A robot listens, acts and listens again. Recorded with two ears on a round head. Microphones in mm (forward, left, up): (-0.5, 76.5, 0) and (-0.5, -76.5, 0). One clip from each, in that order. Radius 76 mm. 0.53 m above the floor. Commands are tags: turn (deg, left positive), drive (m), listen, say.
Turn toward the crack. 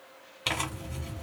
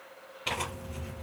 <listen/>
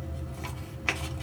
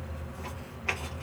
<listen/>
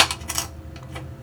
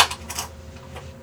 <say>I can't make out a crack to turn to.</say>